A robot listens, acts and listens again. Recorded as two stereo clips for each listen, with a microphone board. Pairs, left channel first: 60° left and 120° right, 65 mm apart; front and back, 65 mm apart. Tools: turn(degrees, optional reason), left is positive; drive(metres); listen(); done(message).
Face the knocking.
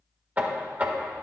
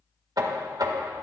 turn(degrees=175, reason="The knocking: 175° left.")
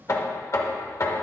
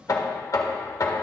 turn(degrees=25, reason="The knocking is now 25° left.")
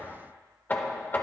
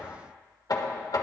done("Found it: knocking, straight ahead, 1 to 2 m away.")